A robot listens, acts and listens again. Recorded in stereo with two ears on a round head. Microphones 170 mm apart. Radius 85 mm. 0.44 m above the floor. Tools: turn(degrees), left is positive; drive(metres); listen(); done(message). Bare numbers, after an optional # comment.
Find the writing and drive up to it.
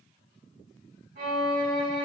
listen()
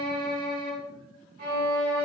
listen()
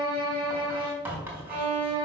turn(-30)
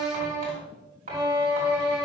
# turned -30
# So it is at 135° right.
turn(-135)
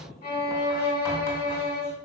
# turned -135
listen()
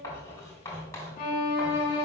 # The writing is now 15° left.
turn(15)
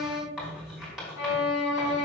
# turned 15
drive(1.0)
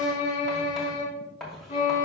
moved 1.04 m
drive(1.0)
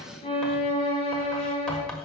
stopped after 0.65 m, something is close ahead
done("Arrived at the writing, straight ahead.")